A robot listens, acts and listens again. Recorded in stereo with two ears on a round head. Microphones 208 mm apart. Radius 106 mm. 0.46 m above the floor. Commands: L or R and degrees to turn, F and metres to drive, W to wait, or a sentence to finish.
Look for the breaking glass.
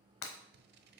L90
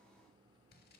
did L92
I heard breaking glass from this way, but can't make it out now.